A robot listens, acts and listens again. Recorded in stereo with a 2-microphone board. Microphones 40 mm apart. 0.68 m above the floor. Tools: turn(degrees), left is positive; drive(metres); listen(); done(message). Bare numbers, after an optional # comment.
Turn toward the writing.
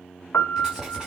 turn(-30)
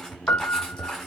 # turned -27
# So it is at 10° left.
turn(10)
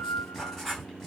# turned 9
done("Found it: writing, straight ahead, over 4 m away.")